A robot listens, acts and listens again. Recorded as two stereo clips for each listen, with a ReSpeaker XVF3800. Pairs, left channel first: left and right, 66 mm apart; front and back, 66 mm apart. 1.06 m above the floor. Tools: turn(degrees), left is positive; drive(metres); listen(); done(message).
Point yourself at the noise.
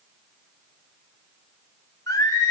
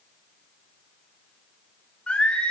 turn(degrees=75)
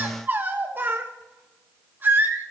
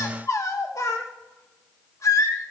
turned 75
turn(degrees=-35)
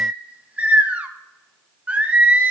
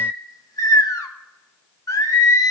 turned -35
turn(degrees=-25)
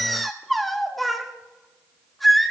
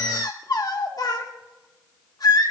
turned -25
done("Facing the singing.")